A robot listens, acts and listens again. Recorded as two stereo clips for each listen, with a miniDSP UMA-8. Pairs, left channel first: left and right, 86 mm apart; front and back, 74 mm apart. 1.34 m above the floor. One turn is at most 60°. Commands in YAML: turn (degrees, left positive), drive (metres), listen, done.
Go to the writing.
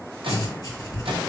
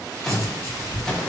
turn: 50
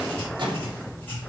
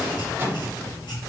turn: 15
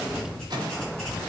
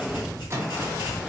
drive: 1.0
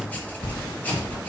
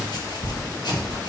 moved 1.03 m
turn: 15
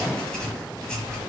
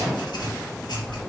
drive: 1.0
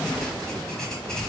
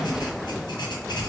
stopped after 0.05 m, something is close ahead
done: "I am next to the writing."